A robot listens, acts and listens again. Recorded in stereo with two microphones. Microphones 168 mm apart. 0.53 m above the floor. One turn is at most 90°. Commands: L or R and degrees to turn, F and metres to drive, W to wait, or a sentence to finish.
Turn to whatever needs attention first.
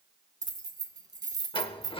W
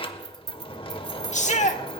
L50
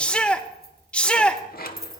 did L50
L10
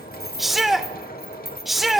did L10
Facing the shout, 1 to 2 m away.